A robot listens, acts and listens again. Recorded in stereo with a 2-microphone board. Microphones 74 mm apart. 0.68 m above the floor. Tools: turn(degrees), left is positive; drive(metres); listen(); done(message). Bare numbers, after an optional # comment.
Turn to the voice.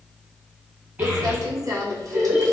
# The child speaking: about 20° right or 160° right.
turn(-20)
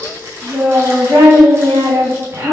# So it is at 140° right.
turn(-140)
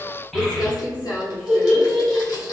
done("Facing the child speaking, 1 to 2 m away.")